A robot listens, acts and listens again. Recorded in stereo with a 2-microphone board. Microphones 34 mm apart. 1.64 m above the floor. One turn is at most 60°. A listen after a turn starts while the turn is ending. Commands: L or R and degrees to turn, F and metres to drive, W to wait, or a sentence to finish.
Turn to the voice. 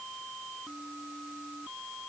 W
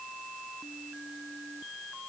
W
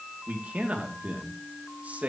R45
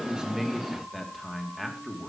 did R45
Found it: a man speaking, straight ahead, 2 to 4 m away.